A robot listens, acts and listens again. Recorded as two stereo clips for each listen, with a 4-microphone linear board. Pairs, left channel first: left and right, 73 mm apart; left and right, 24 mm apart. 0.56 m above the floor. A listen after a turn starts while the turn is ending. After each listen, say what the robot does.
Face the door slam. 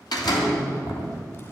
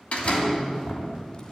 Turn 90° left.
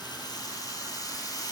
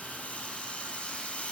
I heard a door slam from this way, but can't make it out now.